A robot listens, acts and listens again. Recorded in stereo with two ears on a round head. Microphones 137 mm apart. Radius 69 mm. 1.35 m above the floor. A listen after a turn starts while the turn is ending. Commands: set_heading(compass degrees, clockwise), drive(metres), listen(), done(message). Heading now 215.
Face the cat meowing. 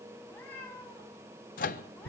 set_heading(185)
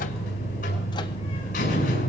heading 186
listen()
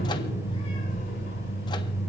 listen()
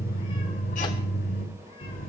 done("I heard a cat meowing, but can't make it out now. It was about 15° right or 140° left.")